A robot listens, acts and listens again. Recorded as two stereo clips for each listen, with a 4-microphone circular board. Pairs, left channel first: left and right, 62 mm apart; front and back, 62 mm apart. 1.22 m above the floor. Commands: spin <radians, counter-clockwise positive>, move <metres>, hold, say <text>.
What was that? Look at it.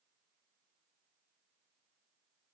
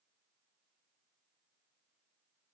hold
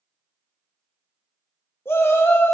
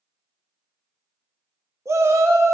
spin 2.44
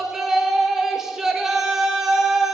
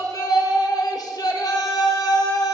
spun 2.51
say Found it: a shout, straight ahead, 1 to 2 m away.